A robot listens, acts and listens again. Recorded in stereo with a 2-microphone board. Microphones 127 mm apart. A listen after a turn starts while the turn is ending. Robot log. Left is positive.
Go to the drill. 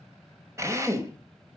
note: The drill: about 25° right or 155° right.
cmd yaw -25
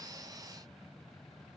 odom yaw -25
cmd idle
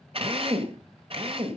note: So it is at 130° right.
cmd yaw -130
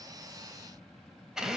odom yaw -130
cmd fwd 1.0
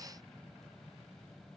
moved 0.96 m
cmd idle
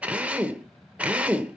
note: The drill is now 10° right.
cmd yaw -10
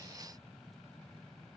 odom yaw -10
cmd idle
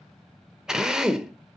cmd fwd 1.0
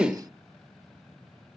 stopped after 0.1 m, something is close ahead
note: The drill is now 10° right.
cmd yaw -10
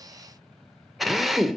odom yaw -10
end: Arrived at the drill, straight ahead.